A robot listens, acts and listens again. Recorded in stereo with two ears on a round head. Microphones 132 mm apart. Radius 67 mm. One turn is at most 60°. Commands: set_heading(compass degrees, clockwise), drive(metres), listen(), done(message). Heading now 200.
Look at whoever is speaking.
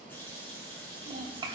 set_heading(230)
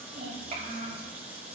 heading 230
set_heading(290)
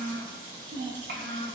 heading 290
set_heading(350)
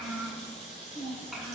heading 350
done("Facing the child speaking.")